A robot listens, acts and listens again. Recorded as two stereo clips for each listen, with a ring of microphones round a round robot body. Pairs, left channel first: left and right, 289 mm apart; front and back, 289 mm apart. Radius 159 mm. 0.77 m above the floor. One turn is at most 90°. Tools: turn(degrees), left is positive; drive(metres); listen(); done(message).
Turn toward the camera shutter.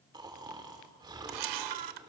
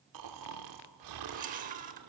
turn(degrees=-90)
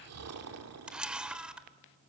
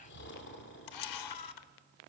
done("Found it: a camera shutter, straight ahead, under 1 m away.")